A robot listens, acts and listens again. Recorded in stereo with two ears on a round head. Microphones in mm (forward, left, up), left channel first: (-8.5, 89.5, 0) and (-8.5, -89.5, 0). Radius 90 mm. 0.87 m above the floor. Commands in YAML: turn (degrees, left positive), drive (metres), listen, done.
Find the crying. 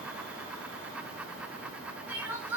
turn: -30
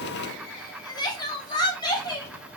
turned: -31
turn: 20
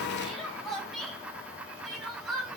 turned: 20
done: "Facing the crying."